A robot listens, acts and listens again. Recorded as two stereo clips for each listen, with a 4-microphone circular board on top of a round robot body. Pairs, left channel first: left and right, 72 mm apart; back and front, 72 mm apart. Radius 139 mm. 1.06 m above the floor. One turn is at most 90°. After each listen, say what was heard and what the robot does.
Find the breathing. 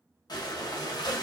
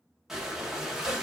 The breathing: 85° left. Turn 85° left.
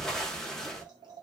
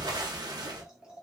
The breathing is now 10° left. Turn 10° left.
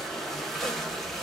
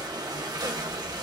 Found it: breathing, straight ahead.